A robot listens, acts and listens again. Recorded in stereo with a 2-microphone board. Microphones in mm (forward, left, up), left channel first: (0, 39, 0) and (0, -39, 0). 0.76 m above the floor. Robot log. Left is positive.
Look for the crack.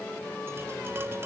cmd idle
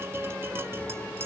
cmd idle
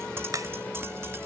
note: The crack: about 50° right or 130° right.
cmd yaw -50
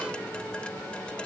cmd idle
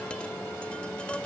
end: I heard a crack, but can't make it out now. It was about straight ahead or 80° right.